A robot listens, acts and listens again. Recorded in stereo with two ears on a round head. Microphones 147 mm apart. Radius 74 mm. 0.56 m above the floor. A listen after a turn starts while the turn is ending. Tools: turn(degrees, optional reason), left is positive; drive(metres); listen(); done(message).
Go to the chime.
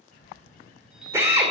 turn(degrees=-30)
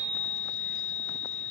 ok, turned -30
turn(degrees=25, reason="So it is at 25° left.")
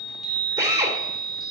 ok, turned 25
drive(metres=1.0)
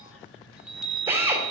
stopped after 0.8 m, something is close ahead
done("I am next to the chime.")